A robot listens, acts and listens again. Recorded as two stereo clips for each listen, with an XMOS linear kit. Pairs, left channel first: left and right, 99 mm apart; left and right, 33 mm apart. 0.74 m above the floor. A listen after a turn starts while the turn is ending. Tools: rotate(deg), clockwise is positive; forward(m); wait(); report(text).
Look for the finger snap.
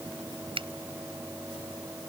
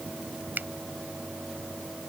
rotate(65)
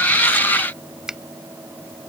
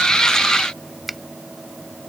report("Facing the finger snap.")